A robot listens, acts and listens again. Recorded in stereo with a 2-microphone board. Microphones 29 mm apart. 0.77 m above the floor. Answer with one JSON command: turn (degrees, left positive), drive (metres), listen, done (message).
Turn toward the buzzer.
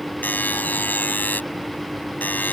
{"turn": 90}
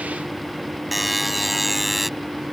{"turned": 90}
{"done": "Found it: a buzzer, straight ahead."}